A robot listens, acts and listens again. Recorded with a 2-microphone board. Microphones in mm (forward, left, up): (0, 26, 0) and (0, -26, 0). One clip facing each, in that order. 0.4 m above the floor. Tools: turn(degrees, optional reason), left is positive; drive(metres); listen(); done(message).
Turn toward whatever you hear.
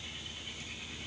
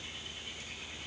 listen()
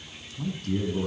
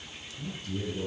turn(degrees=60, reason="The man speaking: about 60° left or 120° left.")
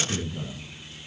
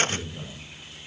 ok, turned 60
done("Found it: a man speaking, straight ahead, 2 to 4 m away.")